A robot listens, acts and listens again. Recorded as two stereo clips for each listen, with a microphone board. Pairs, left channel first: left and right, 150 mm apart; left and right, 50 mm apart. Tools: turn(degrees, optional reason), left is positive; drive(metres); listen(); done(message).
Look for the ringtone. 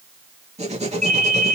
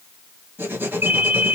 turn(degrees=-55, reason="The ringtone: about 55° right or 125° right.")
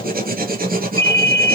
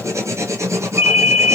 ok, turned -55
turn(degrees=-35, reason="So it is at 35° right.")
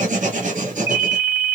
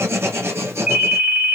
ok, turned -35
turn(degrees=-15, reason="The ringtone is now 15° right.")
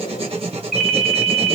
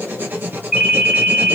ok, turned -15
done("Facing the ringtone, 1 to 2 m away.")